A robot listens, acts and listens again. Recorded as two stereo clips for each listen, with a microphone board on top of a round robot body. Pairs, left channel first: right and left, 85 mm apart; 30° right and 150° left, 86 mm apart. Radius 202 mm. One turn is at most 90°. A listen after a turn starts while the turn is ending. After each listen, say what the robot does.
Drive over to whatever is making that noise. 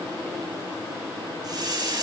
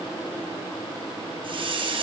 Turn 90° left.
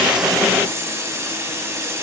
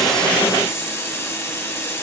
Turn 30° left.
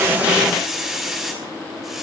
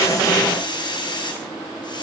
Drive 1.0 m forward.
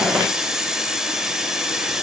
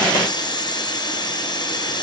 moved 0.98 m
Drive 1.0 m forward.
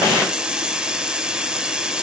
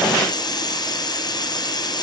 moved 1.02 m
Turn 10° left.
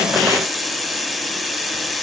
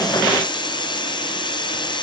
Drive 1.0 m forward.
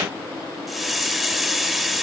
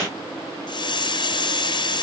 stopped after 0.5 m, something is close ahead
Arrived at the hiss, straight ahead.